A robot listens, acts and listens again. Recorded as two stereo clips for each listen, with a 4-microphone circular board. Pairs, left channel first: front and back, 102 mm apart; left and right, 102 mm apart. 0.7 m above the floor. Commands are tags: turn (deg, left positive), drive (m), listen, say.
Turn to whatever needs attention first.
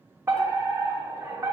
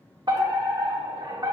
<turn deg="-120"/>
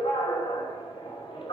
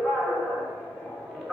<say>Facing the fire alarm, 2 to 4 m away.</say>